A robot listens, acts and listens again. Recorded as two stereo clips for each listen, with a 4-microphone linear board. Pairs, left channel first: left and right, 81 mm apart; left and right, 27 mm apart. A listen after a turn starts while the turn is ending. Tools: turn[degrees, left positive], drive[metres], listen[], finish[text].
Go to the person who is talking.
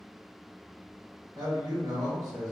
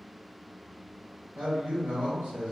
Thought: The man speaking: about 50° right or 130° right.
Action: turn[-50]
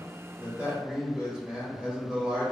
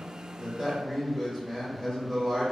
Thought: So it is at 10° right.
Action: turn[-10]
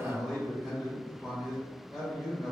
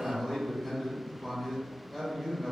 Action: drive[1.0]
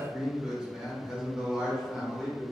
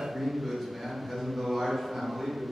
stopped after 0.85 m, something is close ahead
Thought: The man speaking is now 15° right.
Action: turn[-15]
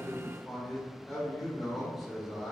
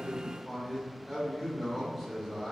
Action: finish[Arrived at the man speaking, straight ahead.]